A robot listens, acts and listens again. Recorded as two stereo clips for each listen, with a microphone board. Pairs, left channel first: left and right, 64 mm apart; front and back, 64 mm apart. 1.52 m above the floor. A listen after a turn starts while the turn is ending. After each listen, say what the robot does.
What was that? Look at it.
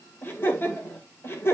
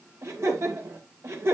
Turn 135° left.
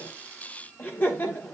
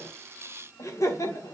Turn 30° left.
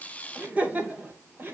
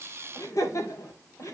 Turn 35° right.
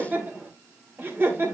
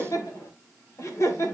Turn 40° right.
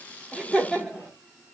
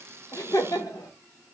Facing the laughter.